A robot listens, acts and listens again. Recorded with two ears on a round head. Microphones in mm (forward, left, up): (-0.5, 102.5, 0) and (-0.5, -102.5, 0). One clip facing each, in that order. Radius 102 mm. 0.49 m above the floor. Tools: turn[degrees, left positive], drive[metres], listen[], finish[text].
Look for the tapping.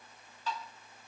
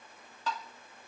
Thought: The tapping: about 60° right or 120° right.
Action: turn[-60]
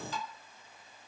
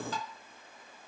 Thought: So it is at 55° right.
Action: turn[-55]
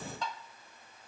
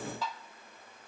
Action: finish[Facing the tapping, 1 to 2 m away.]